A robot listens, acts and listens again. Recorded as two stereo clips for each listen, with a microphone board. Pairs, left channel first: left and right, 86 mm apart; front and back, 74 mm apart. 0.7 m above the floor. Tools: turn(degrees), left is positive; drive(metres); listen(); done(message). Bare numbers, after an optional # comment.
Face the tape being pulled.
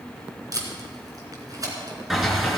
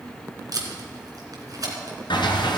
# The tape being pulled: 140° right.
turn(-140)
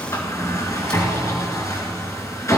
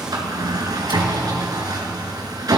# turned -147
# Nothing new. It was at 10° left.
turn(10)
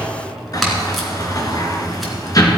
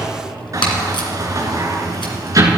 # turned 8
done("Facing the tape being pulled, 2 to 4 m away.")